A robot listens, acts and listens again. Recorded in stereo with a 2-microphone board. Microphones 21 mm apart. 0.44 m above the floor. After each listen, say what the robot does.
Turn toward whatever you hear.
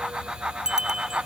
Turn 30° right.
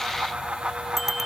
Facing the bicycle bell.